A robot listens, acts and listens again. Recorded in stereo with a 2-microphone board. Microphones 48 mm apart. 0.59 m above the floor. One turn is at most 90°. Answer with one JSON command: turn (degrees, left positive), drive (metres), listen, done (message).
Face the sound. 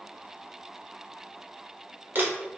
{"turn": -45}
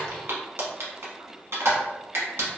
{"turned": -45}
{"turn": -80}
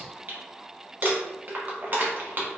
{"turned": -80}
{"turn": -45}
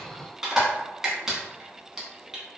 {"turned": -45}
{"turn": -10}
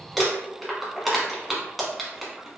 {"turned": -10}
{"done": "Facing the crumpling, under 1 m away."}